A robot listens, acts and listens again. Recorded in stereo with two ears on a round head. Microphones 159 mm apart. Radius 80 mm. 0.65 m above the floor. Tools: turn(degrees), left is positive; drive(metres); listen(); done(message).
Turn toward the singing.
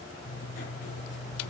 listen()
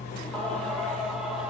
turn(degrees=-30)
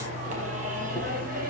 turn(degrees=-125)
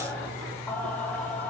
turn(degrees=10)
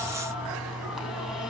done("Found it: singing, straight ahead, 2 to 4 m away.")